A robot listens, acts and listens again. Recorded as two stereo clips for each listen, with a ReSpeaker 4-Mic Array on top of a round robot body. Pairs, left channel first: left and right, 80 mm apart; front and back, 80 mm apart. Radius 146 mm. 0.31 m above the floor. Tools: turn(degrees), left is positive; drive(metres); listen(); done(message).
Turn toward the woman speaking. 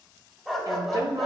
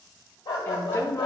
turn(degrees=-55)
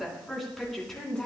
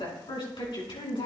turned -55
done("Found it: a woman speaking, straight ahead.")